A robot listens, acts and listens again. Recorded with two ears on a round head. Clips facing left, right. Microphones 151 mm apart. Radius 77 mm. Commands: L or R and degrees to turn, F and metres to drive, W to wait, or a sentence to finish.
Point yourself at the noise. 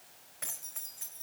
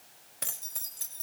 R50
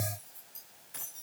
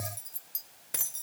R75
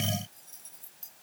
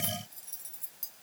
R15
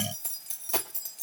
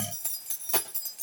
Found it: keys jangling, straight ahead.